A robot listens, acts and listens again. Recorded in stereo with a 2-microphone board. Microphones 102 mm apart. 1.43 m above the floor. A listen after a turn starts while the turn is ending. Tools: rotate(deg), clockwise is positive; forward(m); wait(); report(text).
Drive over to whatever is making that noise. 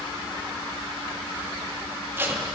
rotate(25)
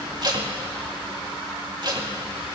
rotate(130)
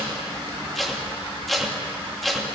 forward(1.0)
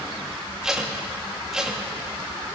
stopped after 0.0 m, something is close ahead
report("Something is in my way. I am facing the tape being pulled but have not reached it.")